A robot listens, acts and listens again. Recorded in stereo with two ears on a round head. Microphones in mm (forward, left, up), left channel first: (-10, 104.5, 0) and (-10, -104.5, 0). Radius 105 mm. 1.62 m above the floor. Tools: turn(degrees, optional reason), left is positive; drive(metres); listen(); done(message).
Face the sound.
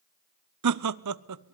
turn(degrees=-90)
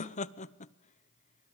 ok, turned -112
turn(degrees=30, reason="So it is at 30° left.")
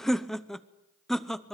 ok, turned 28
done("Facing the laughter.")